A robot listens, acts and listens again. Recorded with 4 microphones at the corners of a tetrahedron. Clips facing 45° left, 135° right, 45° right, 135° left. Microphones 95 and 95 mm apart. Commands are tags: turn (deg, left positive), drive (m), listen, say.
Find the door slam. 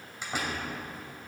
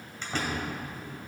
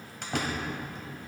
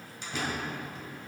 <turn deg="-35"/>
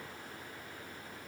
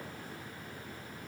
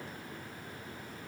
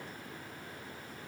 <say>I heard a door slam from this way, but can't make it out now.</say>